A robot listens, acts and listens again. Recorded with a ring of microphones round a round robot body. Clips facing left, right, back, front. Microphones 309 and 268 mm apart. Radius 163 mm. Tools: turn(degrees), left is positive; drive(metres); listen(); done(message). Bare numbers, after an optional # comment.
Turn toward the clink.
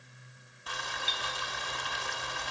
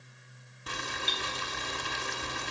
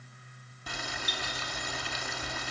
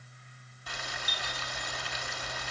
# The clink: 110° right.
turn(-110)
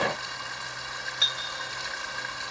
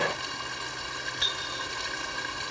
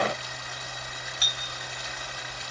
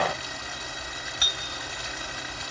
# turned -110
done("Facing the clink.")